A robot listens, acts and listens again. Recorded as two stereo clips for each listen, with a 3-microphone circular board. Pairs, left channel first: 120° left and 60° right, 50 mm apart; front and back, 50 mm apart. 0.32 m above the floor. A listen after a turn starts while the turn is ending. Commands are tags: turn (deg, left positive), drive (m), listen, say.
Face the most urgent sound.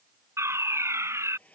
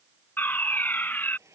<turn deg="-50"/>
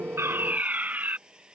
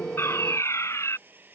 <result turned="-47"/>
<say>Facing the fire alarm.</say>